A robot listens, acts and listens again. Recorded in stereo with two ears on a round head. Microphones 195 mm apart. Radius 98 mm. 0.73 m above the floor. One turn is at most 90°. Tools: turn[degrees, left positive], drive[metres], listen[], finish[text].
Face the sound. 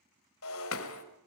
Thought: The breaking glass: about 65° left or 115° left.
Action: turn[65]
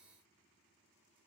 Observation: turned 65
Action: listen[]
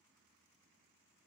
Action: finish[I heard breaking glass, but can't make it out now. It was about straight ahead or 50° left.]